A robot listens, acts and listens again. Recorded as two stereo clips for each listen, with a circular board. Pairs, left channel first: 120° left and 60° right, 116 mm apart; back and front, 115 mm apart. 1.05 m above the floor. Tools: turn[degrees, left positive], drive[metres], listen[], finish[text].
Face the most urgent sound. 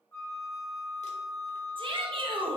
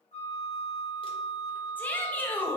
Thought: The shout: 105° right.
Action: turn[-105]
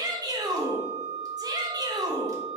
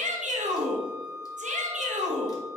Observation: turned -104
Action: finish[Facing the shout, 1 to 2 m away.]